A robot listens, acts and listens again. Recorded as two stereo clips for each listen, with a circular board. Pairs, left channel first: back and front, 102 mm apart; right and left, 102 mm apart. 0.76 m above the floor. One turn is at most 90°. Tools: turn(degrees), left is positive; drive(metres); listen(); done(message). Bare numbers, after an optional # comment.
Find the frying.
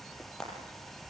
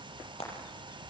# The frying: 95° right.
turn(-90)
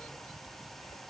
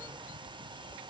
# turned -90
listen()
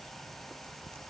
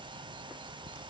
listen()
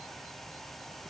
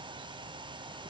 done("I heard frying from this way, but can't make it out now.")